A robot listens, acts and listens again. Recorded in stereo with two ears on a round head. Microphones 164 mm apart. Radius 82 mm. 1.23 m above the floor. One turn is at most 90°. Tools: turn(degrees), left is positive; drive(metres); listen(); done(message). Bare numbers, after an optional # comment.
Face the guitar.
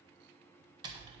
listen()
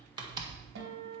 # The guitar: about 75° right or 105° right.
turn(-75)
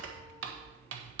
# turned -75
listen()
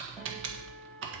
listen()
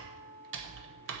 done("Found it: a guitar, straight ahead.")